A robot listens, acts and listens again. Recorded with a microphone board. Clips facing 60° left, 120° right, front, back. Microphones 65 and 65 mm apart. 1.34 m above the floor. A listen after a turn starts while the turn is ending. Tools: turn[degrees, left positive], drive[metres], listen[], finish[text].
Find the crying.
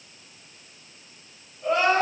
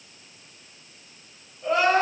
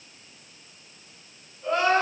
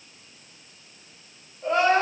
Thought: The crying: 150° left.
Action: turn[150]
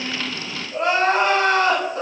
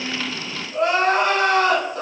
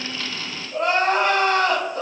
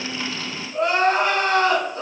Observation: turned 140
Thought: The crying is now 10° left.
Action: turn[10]
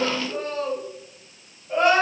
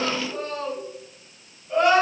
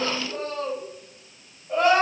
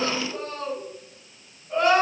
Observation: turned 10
Action: finish[Found it: crying, straight ahead.]